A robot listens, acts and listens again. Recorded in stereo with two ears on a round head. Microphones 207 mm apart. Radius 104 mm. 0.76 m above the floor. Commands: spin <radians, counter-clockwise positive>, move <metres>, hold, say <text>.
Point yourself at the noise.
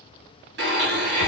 spin -0.87
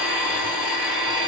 spin -0.17
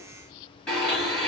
say Facing the blender, 1 to 2 m away.